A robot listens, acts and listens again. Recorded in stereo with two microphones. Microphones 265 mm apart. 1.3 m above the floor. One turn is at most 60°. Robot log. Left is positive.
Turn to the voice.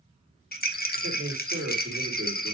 note: The man speaking: about 55° right or 125° right.
cmd yaw -55
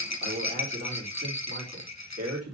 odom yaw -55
note: So it is at 65° right.
cmd yaw -60
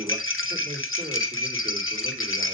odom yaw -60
note: The man speaking is now 30° right.
cmd yaw -30
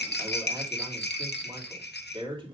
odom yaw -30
note: The man speaking is now 20° right.
cmd yaw -20
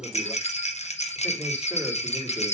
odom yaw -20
end: Found it: a man speaking, straight ahead, 2 to 4 m away.